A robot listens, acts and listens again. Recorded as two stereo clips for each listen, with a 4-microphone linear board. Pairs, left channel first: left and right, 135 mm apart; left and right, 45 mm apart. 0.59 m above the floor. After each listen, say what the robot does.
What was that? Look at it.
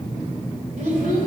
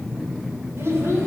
Turn 75° right.
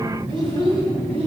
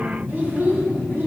Turn 50° right.
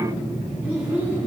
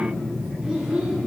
Turn 15° right.
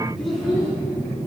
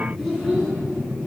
Facing the child speaking, 2 to 4 m away.